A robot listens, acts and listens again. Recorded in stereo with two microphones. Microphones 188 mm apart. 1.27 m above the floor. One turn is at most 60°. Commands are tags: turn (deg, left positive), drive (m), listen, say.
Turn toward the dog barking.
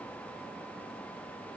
<listen/>
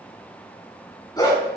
<turn deg="20"/>
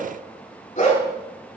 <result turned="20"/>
<turn deg="40"/>
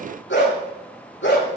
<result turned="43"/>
<turn deg="60"/>
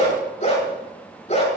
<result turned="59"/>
<turn deg="40"/>
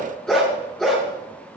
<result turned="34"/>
<say>Found it: a dog barking, straight ahead.</say>